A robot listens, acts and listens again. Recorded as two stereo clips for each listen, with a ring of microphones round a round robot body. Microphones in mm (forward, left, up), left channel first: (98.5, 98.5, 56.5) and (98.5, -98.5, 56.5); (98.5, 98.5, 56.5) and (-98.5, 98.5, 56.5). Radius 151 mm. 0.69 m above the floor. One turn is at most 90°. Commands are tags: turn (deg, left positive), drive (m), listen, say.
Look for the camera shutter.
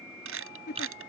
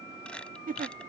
<turn deg="-85"/>
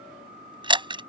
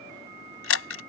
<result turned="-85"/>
<turn deg="-25"/>
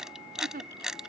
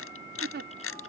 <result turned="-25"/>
<say>Found it: a camera shutter, straight ahead.</say>